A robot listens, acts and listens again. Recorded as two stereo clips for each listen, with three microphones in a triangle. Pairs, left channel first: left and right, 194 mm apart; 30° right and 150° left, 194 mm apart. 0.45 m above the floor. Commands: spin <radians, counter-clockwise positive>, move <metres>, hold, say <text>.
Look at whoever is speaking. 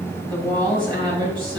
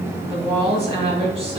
spin -2.71
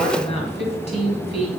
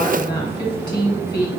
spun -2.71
spin 0.61
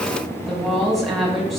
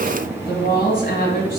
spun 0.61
say Found it: a woman speaking, straight ahead, 1 to 2 m away.